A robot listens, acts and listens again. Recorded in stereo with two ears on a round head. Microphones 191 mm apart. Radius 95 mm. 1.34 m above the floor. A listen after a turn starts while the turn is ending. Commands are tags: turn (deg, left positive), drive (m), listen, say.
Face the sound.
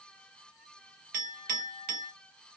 <turn deg="-40"/>
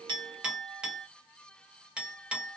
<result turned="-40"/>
<say>Found it: a clink, straight ahead.</say>